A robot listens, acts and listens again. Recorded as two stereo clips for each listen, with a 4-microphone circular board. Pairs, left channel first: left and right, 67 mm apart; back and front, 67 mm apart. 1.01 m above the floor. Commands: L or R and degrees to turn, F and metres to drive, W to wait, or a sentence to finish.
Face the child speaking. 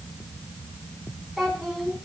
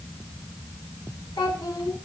L180
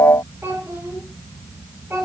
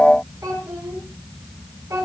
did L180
R40
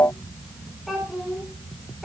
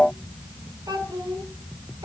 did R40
Facing the child speaking, over 4 m away.